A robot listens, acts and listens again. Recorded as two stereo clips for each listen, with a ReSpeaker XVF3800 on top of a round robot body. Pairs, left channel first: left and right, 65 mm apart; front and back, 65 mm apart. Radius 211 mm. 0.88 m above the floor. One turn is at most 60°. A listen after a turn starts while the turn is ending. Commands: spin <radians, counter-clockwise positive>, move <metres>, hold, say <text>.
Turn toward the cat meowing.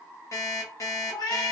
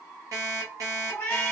spin 1.05
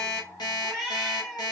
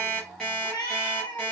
say Facing the cat meowing, 1 to 2 m away.